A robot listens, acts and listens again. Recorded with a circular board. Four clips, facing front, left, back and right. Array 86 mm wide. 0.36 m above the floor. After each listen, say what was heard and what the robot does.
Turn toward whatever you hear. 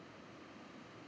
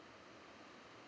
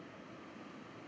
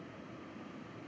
Keep listening.
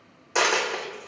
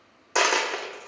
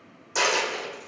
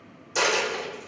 The dropped coin: 65° left. Turn 65° left.
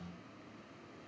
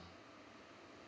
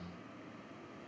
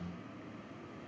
Facing where the dropped coin came from. I can't hear it now.